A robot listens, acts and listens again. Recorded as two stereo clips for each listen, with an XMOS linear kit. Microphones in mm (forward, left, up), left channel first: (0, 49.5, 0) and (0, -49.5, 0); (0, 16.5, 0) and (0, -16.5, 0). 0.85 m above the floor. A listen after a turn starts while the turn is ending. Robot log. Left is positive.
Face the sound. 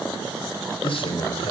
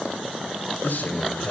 note: The man speaking: about 70° left or 110° left.
cmd yaw +70
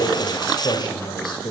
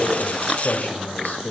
note: So it is at 50° left.
cmd yaw +50
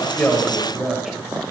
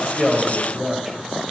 end: Found it: a man speaking, straight ahead.